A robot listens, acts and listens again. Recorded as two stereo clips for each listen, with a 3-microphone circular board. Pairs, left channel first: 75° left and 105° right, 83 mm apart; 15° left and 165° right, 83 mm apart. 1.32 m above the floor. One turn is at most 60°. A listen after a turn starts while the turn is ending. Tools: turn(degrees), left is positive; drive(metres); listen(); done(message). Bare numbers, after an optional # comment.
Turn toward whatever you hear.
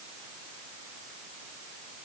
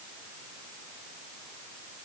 listen()
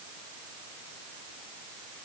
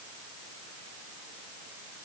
listen()
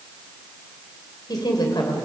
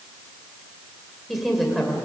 # The woman speaking: 105° left.
turn(60)
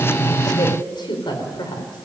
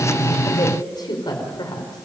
# The woman speaking is now 50° left.
turn(50)
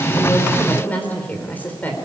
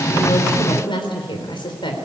done("Found it: a woman speaking, straight ahead.")